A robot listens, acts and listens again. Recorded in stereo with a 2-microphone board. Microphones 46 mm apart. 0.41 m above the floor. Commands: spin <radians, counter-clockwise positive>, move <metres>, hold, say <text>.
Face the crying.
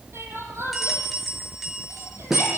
spin -1.13
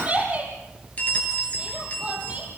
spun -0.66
spin -0.52
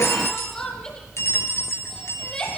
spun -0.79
spin 0.26
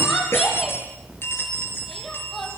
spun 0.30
say Facing the crying.